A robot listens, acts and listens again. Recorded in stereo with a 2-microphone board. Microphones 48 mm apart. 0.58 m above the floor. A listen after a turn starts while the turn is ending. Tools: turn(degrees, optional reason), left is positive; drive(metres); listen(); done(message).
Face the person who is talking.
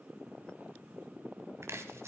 listen()
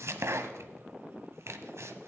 listen()
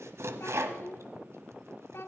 turn(degrees=60, reason="The child speaking: about 60° left or 120° left.")
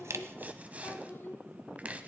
turn(degrees=55, reason="So it is at 55° left.")
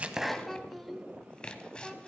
done("Facing the child speaking, 1 to 2 m away.")